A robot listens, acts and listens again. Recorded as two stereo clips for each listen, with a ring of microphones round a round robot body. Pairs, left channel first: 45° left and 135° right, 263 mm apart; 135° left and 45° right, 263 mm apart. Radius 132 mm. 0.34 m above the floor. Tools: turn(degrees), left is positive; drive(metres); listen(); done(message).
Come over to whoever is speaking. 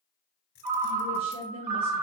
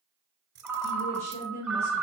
turn(degrees=-165)
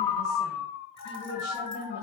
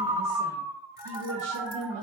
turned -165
drive(metres=1.0)
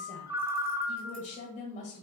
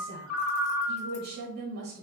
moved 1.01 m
turn(degrees=-10)
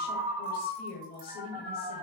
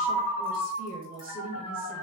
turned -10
drive(metres=1.0)
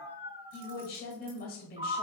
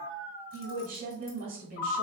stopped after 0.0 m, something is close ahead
done("Arrived at the woman speaking, straight ahead.")